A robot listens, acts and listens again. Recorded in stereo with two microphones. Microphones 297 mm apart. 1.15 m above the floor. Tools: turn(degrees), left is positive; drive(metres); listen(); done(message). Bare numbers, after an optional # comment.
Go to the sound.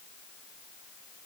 listen()
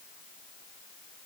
listen()
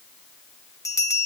turn(30)
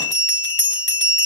# So it is at 140° left.
turn(140)
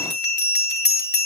# The bell is now 35° left.
turn(35)
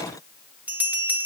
drive(1.0)
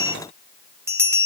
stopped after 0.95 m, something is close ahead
# The bell is now 10° right.
turn(-10)
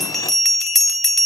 done("I am next to the bell.")